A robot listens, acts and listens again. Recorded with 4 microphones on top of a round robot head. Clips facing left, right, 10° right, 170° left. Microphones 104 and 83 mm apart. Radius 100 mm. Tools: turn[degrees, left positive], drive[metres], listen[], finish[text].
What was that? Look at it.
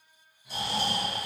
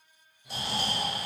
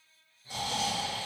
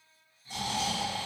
Thought: The snoring: 45° right.
Action: turn[-45]
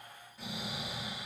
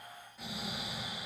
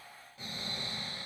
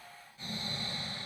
Action: finish[Facing the snoring.]